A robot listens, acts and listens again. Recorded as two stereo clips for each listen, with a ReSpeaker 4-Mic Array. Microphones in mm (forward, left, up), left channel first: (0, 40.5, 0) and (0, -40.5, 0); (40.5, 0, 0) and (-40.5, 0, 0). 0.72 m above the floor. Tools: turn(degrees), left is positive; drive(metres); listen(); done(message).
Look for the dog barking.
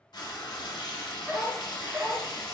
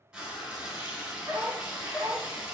turn(degrees=-140)
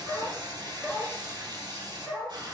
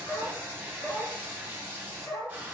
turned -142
turn(degrees=20)
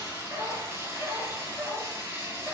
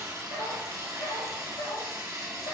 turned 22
done("Facing the dog barking.")